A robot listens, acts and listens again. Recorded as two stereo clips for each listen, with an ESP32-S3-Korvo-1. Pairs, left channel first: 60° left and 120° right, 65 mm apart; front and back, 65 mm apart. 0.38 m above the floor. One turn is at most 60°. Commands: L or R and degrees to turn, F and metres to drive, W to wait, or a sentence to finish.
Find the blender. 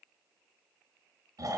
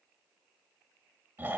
W
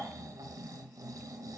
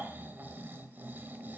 W
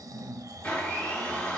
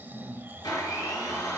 R15
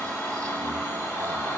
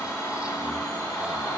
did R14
Found it: a blender, straight ahead.